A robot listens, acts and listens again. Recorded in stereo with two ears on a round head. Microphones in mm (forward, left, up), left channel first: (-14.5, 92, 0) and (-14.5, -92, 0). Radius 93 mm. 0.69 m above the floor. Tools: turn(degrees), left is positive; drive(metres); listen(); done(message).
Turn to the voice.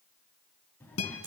turn(degrees=30)
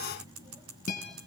turn(degrees=-20)
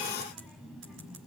done("Facing the child speaking.")